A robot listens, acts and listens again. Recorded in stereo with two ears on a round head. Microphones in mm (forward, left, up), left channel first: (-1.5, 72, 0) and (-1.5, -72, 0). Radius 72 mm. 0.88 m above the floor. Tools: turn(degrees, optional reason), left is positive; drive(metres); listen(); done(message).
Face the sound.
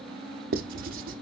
turn(degrees=-60, reason="The writing: about 60° right or 120° right.")
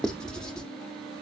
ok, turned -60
done("Facing the writing.")